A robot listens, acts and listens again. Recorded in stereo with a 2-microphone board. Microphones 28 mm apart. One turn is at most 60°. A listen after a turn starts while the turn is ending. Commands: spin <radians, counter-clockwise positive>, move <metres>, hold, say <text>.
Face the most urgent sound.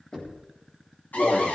spin 1.05
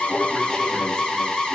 spin 0.35
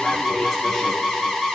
say Found it: an alarm, straight ahead, 2 to 4 m away.